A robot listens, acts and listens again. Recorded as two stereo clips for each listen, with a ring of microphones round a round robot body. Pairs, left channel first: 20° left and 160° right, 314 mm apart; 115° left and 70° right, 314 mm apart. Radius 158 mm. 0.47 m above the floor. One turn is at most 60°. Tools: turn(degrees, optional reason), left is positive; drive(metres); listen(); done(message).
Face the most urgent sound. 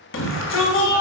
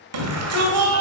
turn(degrees=-25, reason="The shout: 25° right.")
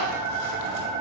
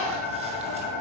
listen()
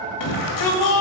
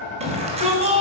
done("Found it: a shout, straight ahead.")